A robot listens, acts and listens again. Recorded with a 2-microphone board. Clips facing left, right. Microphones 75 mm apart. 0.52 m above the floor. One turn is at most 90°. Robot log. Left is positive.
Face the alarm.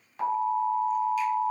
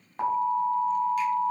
note: The alarm: about 30° right or 150° right.
cmd yaw -30
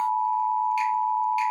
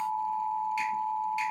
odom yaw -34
end: Facing the alarm.